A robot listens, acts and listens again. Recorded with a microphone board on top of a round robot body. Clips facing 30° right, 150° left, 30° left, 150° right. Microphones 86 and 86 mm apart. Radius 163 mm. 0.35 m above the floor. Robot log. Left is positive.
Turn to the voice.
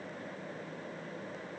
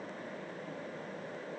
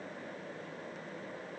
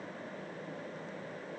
cmd idle
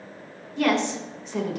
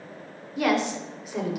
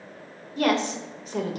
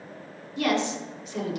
note: The woman speaking: 70° left.
cmd yaw +70
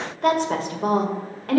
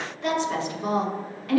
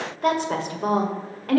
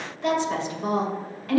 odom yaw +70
end: Facing the woman speaking.